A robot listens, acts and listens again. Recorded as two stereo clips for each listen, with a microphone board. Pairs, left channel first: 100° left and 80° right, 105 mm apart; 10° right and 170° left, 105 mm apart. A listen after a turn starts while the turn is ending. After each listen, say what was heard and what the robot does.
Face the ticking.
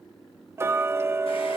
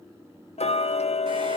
The ticking: 15° right. Turn 15° right.
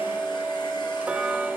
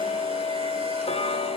Facing the ticking, 1 to 2 m away.